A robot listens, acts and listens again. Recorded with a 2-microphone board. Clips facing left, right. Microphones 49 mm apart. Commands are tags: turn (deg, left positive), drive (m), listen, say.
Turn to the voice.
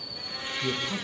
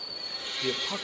<turn deg="-20"/>
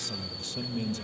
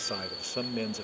<turn deg="-140"/>
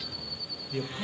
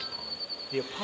<turn deg="-30"/>
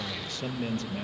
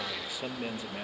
<turn deg="-10"/>
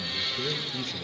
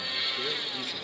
<say>Facing the man speaking.</say>